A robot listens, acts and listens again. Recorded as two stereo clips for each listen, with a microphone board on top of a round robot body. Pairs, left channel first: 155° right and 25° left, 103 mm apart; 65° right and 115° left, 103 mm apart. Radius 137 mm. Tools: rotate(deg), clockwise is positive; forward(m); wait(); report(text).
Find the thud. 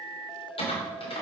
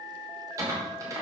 wait()
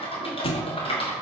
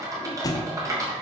rotate(125)
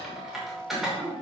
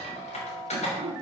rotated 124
report("Facing where the thud came from. I can't hear it now.")